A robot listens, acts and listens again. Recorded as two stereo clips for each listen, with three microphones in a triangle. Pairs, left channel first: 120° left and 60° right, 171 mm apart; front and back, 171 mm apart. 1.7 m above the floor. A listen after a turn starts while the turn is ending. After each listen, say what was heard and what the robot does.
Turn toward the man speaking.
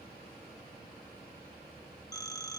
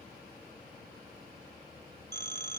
Keep listening.
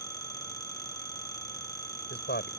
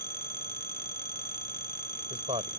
The man speaking: 125° left. Turn 125° left.
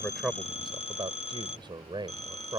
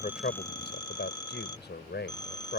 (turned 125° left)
Facing the man speaking.